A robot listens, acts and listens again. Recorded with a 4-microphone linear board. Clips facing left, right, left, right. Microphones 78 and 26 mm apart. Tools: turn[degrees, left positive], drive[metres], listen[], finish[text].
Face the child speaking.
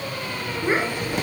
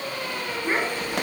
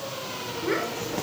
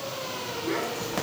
Thought: The child speaking: about 15° left or 165° left.
Action: turn[15]
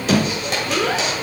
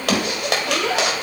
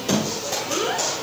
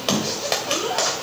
Thought: The child speaking: about 35° left or 145° left.
Action: turn[35]
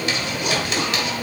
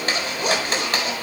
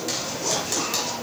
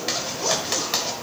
Action: listen[]
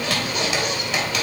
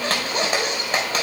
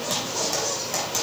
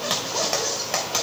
Action: listen[]
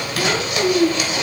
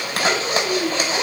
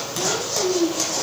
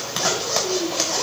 Thought: So it is at 105° left.
Action: turn[105]
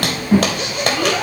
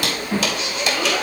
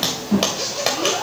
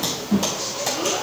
Thought: The child speaking is now 10° left.
Action: turn[10]
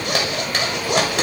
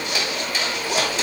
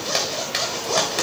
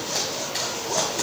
Action: listen[]
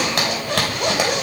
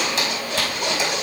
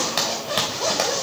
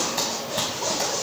Action: listen[]
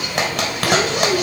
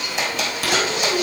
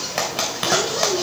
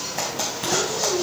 Action: finish[Facing the child speaking.]